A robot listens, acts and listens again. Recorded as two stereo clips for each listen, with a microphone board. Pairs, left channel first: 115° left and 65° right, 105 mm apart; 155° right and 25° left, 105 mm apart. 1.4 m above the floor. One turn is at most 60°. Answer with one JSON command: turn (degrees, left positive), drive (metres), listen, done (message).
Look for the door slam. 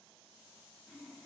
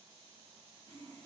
{"listen": true}
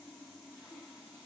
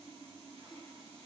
{"listen": true}
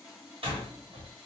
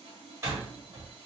{"turn": -40}
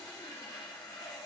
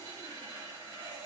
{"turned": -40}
{"done": "Facing where the door slam came from. I can't hear it now."}